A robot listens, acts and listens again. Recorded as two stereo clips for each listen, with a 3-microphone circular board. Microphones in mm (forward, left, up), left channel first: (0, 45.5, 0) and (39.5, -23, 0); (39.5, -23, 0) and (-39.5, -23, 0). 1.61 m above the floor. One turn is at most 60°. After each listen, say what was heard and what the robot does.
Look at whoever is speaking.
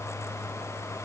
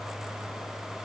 Keep listening.
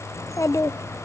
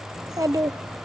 The child speaking: 160° left. Turn 60° left.
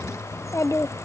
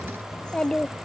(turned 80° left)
The child speaking is now 80° left. Turn 60° left.
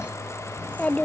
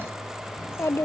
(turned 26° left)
The child speaking is now 50° left. Turn 50° left.
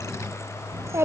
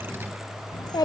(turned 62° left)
The child speaking is now 10° right. Turn 10° right.
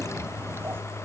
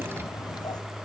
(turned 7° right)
Keep listening.
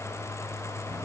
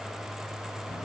Keep listening.
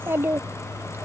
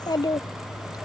Facing the child speaking.